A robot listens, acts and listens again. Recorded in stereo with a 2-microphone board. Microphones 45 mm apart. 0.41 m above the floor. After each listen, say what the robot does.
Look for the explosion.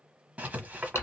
Keep listening.
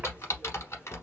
Keep listening.
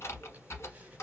I can't make out an explosion to turn to.